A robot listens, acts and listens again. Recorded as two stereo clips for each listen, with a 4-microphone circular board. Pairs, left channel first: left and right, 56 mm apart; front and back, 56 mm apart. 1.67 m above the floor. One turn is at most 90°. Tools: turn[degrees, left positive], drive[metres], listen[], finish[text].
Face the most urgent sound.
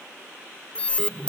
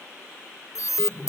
Thought: The alarm: 20° left.
Action: turn[20]
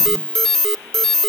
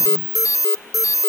Thought: The alarm is now 10° left.
Action: turn[10]
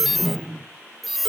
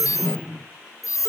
Action: finish[Facing the alarm.]